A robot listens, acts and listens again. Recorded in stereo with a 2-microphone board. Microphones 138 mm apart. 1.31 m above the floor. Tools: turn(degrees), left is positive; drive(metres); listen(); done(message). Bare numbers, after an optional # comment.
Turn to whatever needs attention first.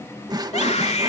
# The scream: about 55° left or 125° left.
turn(55)
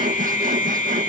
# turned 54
# So it is at 70° left.
turn(70)
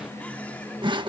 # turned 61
# Nothing new. It was at 10° left.
turn(10)
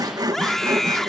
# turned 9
done("Facing the scream.")